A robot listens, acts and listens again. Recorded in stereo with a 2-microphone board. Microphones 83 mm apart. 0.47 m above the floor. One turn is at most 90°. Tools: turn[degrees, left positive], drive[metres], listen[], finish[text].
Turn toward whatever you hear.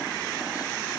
Action: listen[]
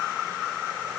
Action: listen[]
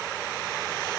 Action: finish[I can't make out anything to turn to.]